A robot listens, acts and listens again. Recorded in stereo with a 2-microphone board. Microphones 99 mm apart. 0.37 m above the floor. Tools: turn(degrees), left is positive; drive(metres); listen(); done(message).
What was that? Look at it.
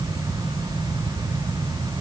listen()
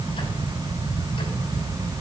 listen()
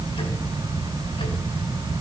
done("I can't make out anything to turn to.")